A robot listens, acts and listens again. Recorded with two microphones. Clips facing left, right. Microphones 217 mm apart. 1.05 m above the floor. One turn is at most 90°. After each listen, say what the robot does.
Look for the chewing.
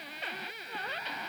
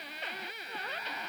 Keep listening.
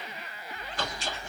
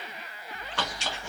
Turn 90° right.
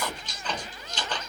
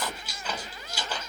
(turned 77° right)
Turn 10° right.
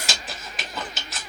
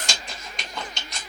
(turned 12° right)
Found it: chewing, straight ahead, 1 to 2 m away.